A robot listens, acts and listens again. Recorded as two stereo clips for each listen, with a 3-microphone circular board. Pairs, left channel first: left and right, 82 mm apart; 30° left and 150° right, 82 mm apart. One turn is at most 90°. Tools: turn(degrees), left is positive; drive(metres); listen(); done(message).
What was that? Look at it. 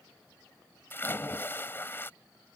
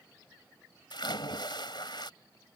turn(degrees=30)
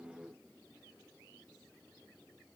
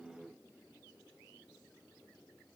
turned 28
done("Facing where the splash came from. I can't hear it now.")